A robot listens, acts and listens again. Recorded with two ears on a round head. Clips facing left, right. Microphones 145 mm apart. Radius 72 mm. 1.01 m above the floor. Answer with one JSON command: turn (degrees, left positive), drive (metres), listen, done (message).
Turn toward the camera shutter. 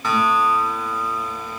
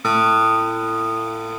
{"listen": true}
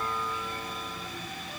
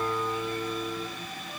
{"listen": true}
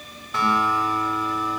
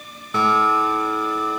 {"done": "I can't make out a camera shutter, only a guitar."}